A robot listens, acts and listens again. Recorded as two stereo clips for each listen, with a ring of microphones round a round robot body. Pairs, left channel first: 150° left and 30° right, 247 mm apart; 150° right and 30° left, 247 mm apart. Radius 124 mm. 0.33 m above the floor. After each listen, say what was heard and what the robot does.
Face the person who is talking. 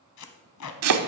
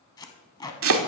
Keep listening.
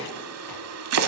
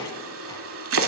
Keep listening.
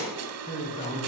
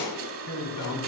The man speaking: 140° right. Turn 140° right.
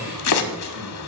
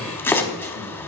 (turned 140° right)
The man speaking is now 10° left. Turn 10° left.
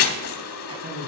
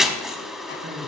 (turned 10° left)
Facing the man speaking.